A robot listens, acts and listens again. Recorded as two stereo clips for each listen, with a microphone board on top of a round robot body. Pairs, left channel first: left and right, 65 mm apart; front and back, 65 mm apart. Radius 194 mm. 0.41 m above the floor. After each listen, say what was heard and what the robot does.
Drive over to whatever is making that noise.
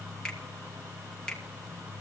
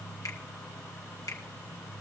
The finger snap: 10° left. Turn 10° left.
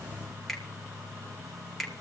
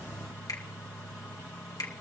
Drive 1.0 m forward.
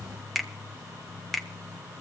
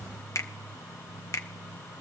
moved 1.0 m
Drive 1.0 m forward.
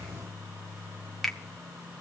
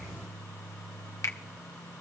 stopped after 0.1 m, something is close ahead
Arrived at the finger snap, straight ahead.